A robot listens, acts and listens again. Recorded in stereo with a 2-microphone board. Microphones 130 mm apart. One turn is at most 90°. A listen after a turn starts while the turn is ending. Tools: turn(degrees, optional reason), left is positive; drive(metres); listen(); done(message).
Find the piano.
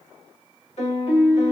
turn(degrees=55, reason="The piano: about 55° left or 125° left.")
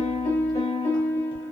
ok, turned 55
turn(degrees=65, reason="So it is at 65° left.")
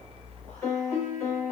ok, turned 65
turn(degrees=20, reason="The piano is now 20° left.")
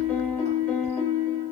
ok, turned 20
turn(degrees=10, reason="The piano is now 10° left.")
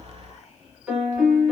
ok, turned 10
done("Facing the piano.")